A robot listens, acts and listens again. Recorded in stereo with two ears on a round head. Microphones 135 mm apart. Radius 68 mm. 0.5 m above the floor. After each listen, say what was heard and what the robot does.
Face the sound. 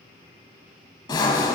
The sawing: about 30° left or 150° left. Turn 30° left.
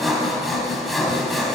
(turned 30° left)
Facing the sawing, 1 to 2 m away.